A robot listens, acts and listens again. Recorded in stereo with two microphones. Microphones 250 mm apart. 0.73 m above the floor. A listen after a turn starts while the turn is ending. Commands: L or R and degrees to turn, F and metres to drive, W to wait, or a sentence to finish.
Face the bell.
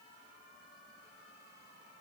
W
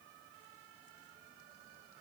W
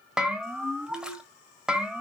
R30
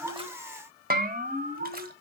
R145
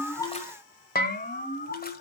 L40
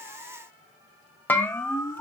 Found it: a bell, straight ahead, 1 to 2 m away.